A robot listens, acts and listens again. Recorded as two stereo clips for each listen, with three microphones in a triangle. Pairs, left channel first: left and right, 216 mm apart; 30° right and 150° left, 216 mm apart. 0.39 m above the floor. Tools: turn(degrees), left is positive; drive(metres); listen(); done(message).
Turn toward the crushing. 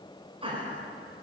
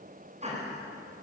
listen()
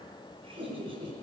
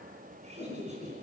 listen()
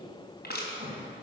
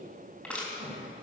turn(degrees=55)
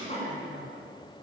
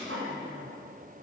listen()
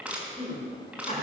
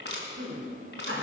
done("Facing the crushing, 2 to 4 m away.")